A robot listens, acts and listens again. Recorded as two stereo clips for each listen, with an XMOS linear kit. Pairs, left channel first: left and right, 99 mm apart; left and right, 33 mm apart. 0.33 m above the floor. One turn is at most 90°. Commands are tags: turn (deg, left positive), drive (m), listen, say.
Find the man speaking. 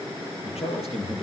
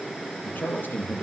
<turn deg="90"/>
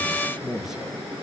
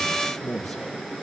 <say>Facing the man speaking, over 4 m away.</say>